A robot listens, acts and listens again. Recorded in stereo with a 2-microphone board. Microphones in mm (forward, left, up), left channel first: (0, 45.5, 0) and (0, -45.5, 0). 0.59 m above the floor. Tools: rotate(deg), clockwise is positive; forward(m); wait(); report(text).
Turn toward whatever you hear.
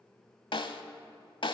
rotate(-65)
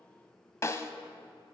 rotate(-35)
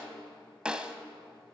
rotate(10)
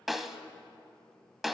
report("Found it: a snare drum, straight ahead, under 1 m away.")